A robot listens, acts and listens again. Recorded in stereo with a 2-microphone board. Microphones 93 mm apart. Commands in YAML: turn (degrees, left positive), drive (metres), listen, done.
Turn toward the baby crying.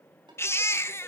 turn: 25
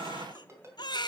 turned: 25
turn: 130
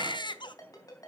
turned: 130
turn: 60
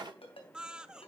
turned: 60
turn: -10
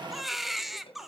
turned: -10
done: "Found it: a baby crying, straight ahead, under 1 m away."